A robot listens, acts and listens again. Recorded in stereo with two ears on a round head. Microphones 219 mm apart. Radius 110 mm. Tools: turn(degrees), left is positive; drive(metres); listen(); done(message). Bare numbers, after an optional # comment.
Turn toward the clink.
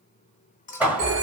# The clink: about 30° left or 150° left.
turn(30)
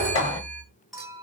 done("Found it: a clink, straight ahead, 2 to 4 m away.")